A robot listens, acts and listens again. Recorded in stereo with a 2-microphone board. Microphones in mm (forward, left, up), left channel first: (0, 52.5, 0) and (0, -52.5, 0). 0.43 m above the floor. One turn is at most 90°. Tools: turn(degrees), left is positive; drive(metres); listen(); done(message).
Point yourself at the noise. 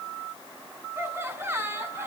turn(degrees=-25)
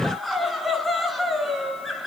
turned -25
done("Found it: laughter, straight ahead, over 4 m away.")